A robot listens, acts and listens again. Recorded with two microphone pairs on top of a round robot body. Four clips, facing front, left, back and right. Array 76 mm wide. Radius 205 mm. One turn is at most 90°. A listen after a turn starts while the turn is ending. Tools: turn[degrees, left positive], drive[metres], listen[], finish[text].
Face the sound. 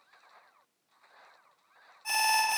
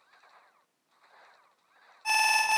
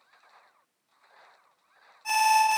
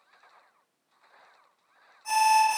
Thought: The alarm: 105° left.
Action: turn[90]
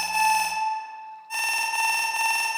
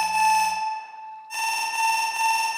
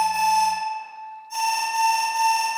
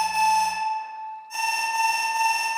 Action: finish[Found it: an alarm, straight ahead.]